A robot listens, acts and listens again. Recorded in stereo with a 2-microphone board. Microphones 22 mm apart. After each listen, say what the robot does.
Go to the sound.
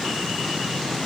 Keep listening.
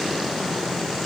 Keep listening.
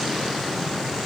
I can't make out anything.